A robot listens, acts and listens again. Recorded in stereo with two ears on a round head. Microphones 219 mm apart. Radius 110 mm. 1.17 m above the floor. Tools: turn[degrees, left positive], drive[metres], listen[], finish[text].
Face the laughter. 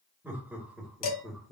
Action: turn[30]
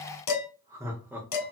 Action: turn[-30]
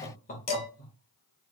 Thought: So it is at 40° left.
Action: turn[40]
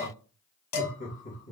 Thought: The laughter is now 35° left.
Action: turn[35]
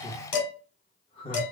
Thought: The laughter is now 25° left.
Action: turn[25]
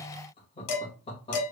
Thought: The laughter is now 25° left.
Action: turn[25]
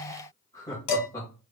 Thought: The laughter is now 15° left.
Action: turn[15]
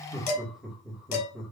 Action: finish[Facing the laughter, 1 to 2 m away.]